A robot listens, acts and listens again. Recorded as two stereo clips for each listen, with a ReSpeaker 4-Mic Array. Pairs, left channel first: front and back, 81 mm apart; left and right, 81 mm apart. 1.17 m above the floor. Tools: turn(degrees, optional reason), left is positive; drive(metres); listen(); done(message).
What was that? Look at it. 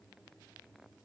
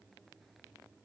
listen()
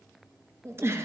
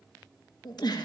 turn(degrees=120, reason="The giggle: 120° left.")
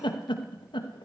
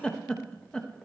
turn(degrees=10, reason="The giggle is now 10° left.")
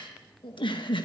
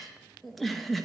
done("Facing the giggle, under 1 m away.")